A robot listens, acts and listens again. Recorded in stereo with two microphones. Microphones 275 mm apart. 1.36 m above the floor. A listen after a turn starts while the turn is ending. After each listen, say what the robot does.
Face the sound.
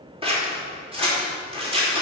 Turn 20° right.
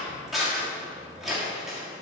Facing the scissors, 2 to 4 m away.